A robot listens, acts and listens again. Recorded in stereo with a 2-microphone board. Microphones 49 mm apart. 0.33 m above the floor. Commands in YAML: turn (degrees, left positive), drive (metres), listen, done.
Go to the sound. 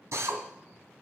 turn: -65
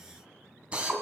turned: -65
turn: -25
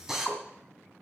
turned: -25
turn: -10
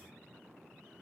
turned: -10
listen: true
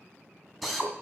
drive: 1.0
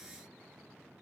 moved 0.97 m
listen: true
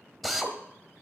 drive: 1.0
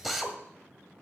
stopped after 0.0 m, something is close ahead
done: "I am next to the drill."